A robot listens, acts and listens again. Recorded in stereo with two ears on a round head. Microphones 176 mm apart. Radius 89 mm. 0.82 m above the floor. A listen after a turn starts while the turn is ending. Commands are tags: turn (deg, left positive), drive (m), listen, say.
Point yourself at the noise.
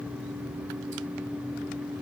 <listen/>
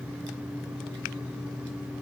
<listen/>
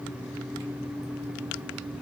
<say>I can't make out anything.</say>